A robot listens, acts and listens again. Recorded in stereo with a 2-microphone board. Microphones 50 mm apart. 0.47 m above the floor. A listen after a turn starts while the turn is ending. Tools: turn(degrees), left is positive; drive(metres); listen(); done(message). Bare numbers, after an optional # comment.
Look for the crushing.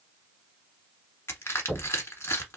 # The crushing: about 60° left or 120° left.
turn(60)
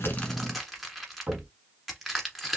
done("Facing the crushing, 1 to 2 m away.")